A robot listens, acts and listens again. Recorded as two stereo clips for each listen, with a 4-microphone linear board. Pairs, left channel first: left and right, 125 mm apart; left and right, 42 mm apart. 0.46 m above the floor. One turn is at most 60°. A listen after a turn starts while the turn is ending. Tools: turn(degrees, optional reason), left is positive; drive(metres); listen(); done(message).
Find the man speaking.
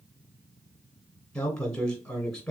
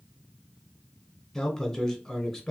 turn(degrees=30)
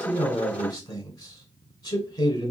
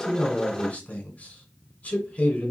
turn(degrees=60, reason="So it is at 145° left.")
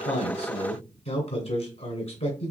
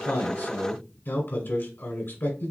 turn(degrees=60, reason="The man speaking is now 80° left.")
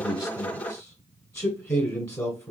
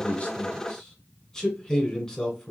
turn(degrees=25, reason="The man speaking is now 25° left.")
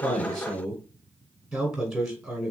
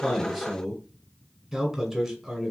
done("Facing the man speaking, 2 to 4 m away.")